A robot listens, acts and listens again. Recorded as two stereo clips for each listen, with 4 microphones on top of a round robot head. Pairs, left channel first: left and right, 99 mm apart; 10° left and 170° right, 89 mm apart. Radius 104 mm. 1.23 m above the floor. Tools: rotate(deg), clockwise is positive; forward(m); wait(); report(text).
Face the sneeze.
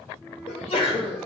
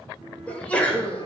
rotate(-90)
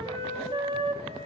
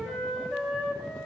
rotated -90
report("Facing where the sneeze came from. I can't hear it now.")